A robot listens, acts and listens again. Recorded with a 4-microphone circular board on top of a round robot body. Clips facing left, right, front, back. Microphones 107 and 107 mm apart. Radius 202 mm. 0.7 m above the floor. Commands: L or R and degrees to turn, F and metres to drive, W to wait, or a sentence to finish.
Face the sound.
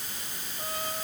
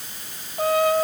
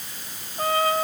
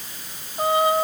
R105
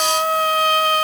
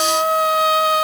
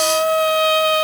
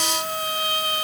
Found it: a trumpet, straight ahead.